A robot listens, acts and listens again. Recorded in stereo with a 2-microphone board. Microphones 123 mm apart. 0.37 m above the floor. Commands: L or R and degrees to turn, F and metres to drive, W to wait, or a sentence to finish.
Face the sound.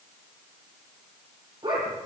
R40
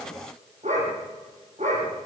R100
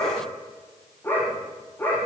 L15
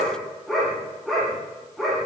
Found it: a dog barking, straight ahead, over 4 m away.